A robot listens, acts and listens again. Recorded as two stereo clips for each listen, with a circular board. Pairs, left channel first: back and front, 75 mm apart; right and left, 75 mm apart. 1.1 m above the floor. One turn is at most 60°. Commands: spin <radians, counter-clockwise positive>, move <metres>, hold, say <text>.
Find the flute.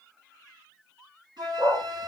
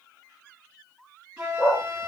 spin 0.26
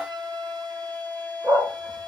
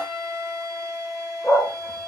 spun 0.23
say Facing the flute, over 4 m away.